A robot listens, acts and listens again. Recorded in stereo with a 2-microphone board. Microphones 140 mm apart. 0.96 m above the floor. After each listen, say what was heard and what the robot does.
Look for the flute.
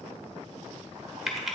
Keep listening.
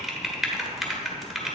Keep listening.
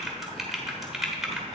I can't make out a flute, only typing on a keyboard.